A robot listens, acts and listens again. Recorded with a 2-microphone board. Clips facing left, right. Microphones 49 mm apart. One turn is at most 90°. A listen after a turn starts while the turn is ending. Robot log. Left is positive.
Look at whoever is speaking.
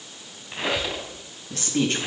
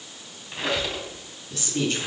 note: The woman speaking: about 45° left or 135° left.
cmd yaw +45
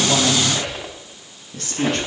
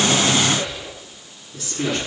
note: So it is at 85° left.
cmd yaw +85
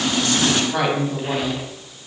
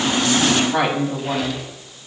note: The woman speaking is now 15° right.
cmd yaw -15
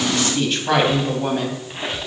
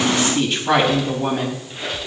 end: Facing the woman speaking.